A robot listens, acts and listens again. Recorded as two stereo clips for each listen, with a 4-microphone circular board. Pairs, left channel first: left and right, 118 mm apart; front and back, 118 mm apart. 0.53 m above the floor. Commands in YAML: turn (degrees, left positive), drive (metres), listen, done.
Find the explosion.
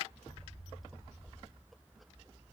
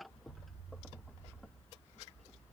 turn: 35
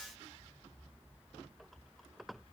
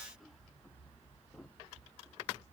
done: "I heard an explosion from this way, but can't make it out now."